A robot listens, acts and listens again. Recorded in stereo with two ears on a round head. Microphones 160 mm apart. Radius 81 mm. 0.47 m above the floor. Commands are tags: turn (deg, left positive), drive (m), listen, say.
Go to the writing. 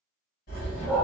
<turn deg="55"/>
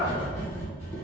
<turn deg="20"/>
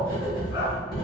<drive m="1.0"/>
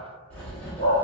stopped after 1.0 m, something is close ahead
<turn deg="15"/>
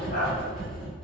<say>I am next to the writing.</say>